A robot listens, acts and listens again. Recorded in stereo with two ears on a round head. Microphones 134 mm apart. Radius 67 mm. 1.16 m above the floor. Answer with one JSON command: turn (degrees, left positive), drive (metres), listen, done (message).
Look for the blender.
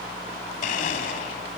{"turn": 60}
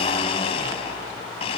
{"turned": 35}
{"turn": 50}
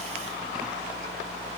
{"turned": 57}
{"listen": true}
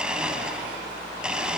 {"done": "Found it: a blender, straight ahead, 1 to 2 m away."}